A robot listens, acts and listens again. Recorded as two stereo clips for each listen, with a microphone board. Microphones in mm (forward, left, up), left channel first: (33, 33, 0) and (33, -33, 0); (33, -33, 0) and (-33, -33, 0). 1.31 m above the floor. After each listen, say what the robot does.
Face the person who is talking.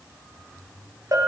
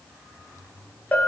Keep listening.
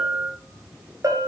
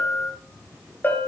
Keep listening.
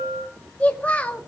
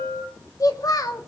Turn 20° left.
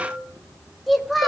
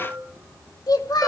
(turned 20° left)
Facing the child speaking.